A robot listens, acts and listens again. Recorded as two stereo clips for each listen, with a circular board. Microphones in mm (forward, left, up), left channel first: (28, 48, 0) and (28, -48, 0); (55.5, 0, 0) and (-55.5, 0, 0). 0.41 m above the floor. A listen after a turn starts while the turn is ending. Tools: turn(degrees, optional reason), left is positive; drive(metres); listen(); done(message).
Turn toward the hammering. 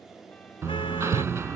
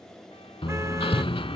turn(degrees=-30, reason="The hammering: 30° right.")
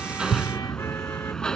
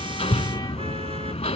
done("Found it: hammering, straight ahead.")